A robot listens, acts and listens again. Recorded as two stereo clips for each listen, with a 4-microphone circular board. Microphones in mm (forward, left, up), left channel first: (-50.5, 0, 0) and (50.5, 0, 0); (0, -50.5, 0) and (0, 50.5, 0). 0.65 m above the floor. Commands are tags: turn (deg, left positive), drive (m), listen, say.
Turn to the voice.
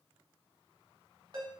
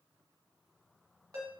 <listen/>
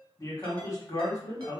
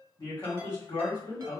<turn deg="-130"/>
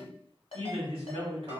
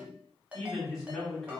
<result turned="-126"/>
<say>Facing the man speaking.</say>